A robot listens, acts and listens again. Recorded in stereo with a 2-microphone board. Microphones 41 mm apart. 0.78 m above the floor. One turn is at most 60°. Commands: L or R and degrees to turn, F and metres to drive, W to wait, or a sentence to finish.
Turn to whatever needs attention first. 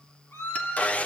L60
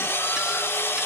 L30
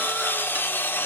W
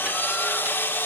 I heard a scream from this way, but can't make it out now.